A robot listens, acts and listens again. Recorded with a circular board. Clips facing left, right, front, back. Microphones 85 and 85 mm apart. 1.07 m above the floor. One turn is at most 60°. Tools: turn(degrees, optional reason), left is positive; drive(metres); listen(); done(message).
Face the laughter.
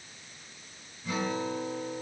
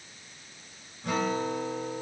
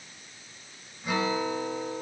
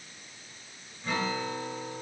listen()
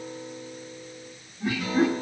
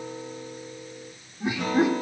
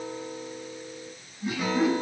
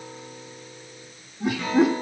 turn(degrees=-60, reason="The laughter: 160° right.")
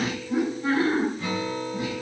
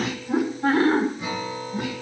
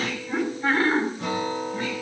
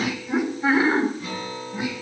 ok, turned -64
turn(degrees=-60, reason="The laughter is now 105° right.")
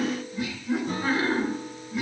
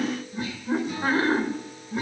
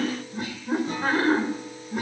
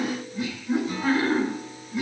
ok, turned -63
turn(degrees=-40, reason="The laughter is now 40° right.")
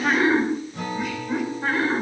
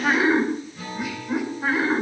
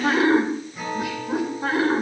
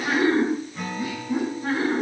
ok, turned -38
done("Found it: laughter, straight ahead, 2 to 4 m away.")